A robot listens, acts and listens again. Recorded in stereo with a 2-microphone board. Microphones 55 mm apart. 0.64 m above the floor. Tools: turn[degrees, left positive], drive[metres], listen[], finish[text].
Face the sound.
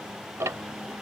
Thought: The ticking: about 65° right or 115° right.
Action: turn[-65]
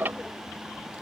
Thought: So it is at 40° right.
Action: turn[-40]
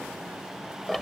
Action: finish[Found it: ticking, straight ahead.]